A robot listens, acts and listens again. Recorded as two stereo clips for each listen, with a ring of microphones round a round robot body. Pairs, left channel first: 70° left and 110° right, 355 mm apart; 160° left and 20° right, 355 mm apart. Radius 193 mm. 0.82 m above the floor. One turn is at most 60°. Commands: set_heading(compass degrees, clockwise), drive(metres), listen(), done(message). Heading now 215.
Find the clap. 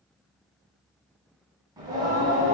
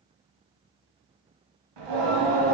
listen()
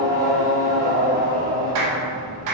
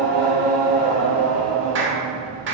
set_heading(275)
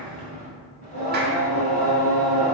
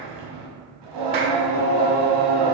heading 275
set_heading(295)
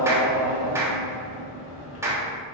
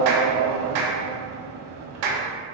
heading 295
set_heading(325)
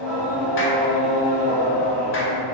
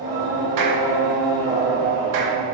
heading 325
listen()
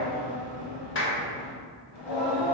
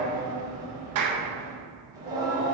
set_heading(315)
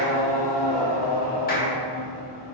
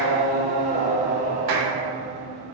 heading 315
done("Facing the clap.")